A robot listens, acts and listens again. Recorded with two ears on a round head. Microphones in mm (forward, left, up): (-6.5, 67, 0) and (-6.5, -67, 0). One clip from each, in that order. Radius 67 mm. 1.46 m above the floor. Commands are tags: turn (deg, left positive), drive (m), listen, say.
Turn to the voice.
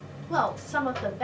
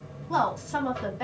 <turn deg="-20"/>
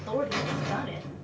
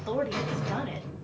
<listen/>
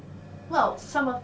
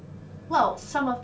<listen/>
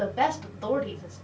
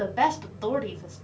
<turn deg="-135"/>
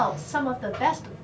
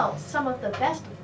<turn deg="20"/>
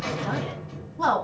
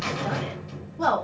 <say>Facing the woman speaking, 2 to 4 m away.</say>